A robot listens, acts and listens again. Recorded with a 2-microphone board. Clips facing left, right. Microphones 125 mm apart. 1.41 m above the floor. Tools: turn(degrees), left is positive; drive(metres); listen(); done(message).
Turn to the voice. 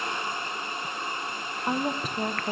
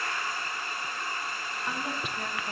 turn(degrees=40)
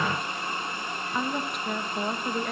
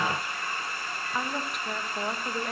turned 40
done("Found it: a woman speaking, straight ahead, 1 to 2 m away.")